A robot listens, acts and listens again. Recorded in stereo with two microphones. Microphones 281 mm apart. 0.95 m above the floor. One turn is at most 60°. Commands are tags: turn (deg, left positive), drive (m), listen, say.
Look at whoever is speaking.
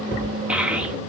<turn deg="-30"/>
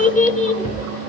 <turn deg="25"/>
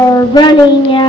<turn deg="15"/>
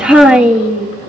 <say>Facing the child speaking.</say>